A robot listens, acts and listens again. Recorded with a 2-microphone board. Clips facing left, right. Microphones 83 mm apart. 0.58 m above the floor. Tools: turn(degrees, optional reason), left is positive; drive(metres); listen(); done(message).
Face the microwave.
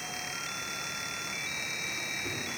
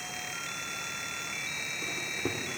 turn(degrees=-60, reason="The microwave: about 60° right or 120° right.")
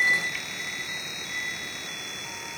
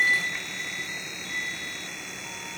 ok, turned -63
listen()
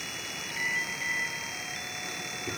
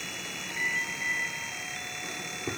turn(degrees=-30, reason="So it is at 30° right.")
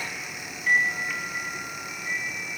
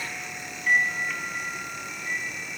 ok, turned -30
done("Facing the microwave.")